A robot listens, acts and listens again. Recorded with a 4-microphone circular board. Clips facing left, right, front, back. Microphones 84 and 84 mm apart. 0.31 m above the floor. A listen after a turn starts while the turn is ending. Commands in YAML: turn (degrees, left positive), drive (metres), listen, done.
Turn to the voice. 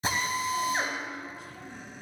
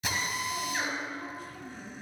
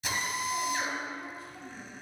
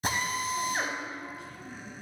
turn: -50
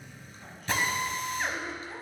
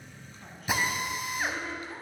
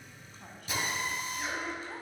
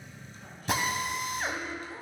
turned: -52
done: "Found it: a woman speaking, straight ahead."